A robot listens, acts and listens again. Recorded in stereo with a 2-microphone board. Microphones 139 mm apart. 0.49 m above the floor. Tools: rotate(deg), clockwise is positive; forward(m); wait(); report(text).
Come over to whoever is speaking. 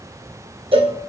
wait()
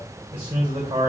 rotate(40)
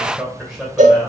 forward(1.0)
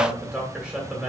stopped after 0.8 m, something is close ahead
rotate(10)
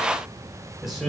report("Arrived at the man speaking, straight ahead.")